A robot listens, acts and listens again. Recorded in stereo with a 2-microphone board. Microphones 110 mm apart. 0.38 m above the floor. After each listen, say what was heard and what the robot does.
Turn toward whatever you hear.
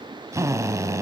The drill: about 30° right or 150° right. Turn 30° right.
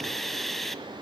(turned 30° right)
Facing the drill.